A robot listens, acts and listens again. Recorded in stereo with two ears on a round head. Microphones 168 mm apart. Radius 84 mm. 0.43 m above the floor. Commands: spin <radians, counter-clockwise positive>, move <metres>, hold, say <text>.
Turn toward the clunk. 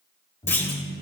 spin 0.52
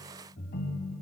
hold
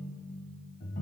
say I heard a clunk, but can't make it out now. It was about 20° right or 140° left.